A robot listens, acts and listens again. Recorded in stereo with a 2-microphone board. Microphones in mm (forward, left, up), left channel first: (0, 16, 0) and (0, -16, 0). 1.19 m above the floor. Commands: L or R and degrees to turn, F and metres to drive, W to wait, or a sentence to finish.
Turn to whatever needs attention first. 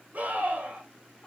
R45
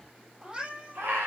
R90
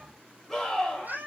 L10
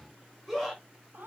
Found it: a scream, straight ahead.